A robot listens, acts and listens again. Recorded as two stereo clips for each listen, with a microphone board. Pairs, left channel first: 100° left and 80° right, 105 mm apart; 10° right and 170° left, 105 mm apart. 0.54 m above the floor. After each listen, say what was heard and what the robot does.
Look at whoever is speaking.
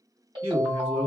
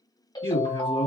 The man speaking: 20° right. Turn 20° right.
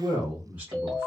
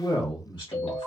The man speaking is now 15° right. Turn 15° right.
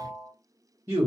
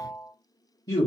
The man speaking is now 45° right. Turn 45° right.
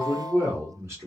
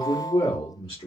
The man speaking is now 25° right. Turn 25° right.
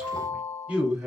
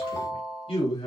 The man speaking is now 15° right. Turn 15° right.
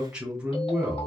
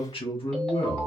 Found it: a man speaking, straight ahead.